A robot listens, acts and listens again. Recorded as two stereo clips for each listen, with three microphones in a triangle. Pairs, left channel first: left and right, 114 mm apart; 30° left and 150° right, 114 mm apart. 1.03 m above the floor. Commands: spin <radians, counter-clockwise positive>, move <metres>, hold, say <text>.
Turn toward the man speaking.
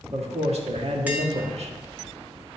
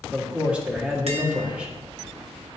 spin -1.22
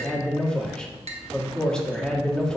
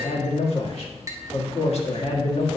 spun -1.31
say Found it: a man speaking, straight ahead, 1 to 2 m away.